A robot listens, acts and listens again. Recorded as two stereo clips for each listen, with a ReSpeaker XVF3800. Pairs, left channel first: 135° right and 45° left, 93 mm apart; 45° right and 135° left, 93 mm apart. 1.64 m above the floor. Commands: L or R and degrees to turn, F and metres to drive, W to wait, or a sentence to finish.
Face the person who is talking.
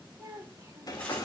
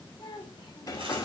R10
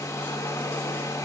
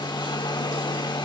W
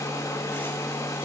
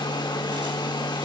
W
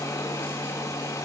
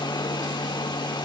I heard a child speaking from this way, but can't make it out now.